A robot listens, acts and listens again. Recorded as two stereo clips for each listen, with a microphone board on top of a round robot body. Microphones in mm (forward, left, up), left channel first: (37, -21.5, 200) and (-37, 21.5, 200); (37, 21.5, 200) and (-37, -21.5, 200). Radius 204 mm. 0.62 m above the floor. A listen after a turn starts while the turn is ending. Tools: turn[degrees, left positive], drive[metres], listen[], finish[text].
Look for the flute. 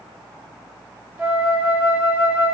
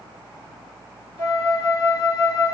Thought: The flute: 75° left.
Action: turn[75]
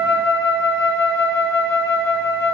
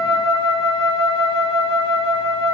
Thought: The flute is now 45° left.
Action: turn[45]
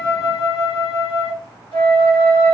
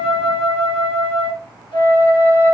Action: finish[Found it: a flute, straight ahead.]